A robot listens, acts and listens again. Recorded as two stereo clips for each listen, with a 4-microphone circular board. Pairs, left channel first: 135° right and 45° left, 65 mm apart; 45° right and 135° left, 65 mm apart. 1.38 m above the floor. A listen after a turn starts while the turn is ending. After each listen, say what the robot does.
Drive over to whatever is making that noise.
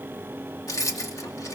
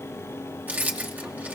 Turn 160° right.
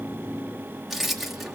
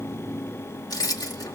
Turn 40° right.
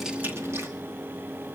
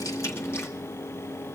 Keep listening.
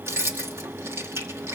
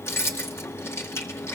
Drive 1.0 m forward.
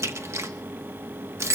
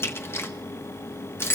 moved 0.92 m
Drive 1.0 m forward.
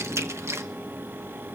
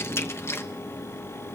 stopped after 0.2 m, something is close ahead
Arrived at the keys jangling, straight ahead.